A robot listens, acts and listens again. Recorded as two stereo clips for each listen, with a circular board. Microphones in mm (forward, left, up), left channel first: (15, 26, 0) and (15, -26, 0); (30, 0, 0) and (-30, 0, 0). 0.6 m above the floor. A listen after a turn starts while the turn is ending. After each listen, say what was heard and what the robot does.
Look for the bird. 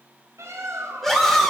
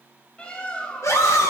The bird: 70° right. Turn 70° right.
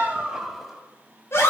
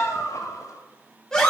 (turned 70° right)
Facing the bird, 1 to 2 m away.